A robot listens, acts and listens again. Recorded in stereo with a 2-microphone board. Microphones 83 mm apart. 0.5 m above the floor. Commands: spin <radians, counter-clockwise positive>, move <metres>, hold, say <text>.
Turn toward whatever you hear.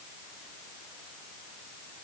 hold
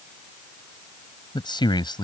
spin 1.22
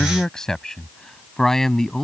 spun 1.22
say Found it: a man speaking, straight ahead.